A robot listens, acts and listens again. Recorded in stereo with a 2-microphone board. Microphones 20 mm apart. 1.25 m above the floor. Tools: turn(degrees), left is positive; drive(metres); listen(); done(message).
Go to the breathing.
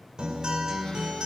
listen()
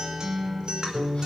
listen()
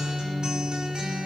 done("I can't make out breathing to turn to.")